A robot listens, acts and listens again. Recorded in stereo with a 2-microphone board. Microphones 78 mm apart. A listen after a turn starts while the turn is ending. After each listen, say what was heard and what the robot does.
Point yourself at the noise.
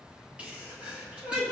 The sneeze: about 15° right or 165° right. Turn 15° right.
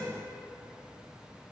Keep listening.
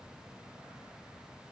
I heard a sneeze, but can't make it out now. It was about straight ahead or 150° right.